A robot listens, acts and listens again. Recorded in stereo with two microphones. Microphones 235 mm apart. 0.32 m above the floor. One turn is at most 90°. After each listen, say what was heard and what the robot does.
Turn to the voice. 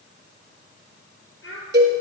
The child speaking: about 60° left or 120° left. Turn 60° left.
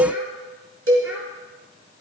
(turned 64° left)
Keep listening.
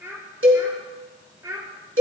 So it is at 15° right. Turn 15° right.
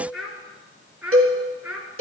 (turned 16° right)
Found it: a child speaking, straight ahead.